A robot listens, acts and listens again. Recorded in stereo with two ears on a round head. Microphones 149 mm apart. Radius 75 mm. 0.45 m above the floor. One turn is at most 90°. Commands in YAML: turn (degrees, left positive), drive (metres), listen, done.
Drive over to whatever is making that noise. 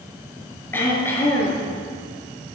turn: 30
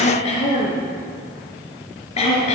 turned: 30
turn: 90
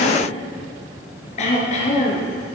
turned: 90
turn: 40
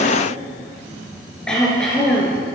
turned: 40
drive: 1.0
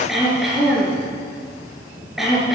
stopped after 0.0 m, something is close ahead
done: "Blocked. The throat clearing is further on, straight ahead."